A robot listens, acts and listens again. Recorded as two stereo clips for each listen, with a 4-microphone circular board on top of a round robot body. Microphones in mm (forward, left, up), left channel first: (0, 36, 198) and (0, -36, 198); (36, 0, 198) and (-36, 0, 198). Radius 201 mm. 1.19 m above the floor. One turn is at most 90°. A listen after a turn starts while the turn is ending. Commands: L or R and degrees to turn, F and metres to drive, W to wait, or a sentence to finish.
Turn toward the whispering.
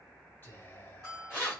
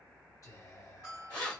L30
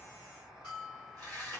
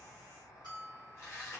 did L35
W
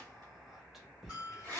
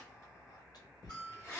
Facing the whispering, 1 to 2 m away.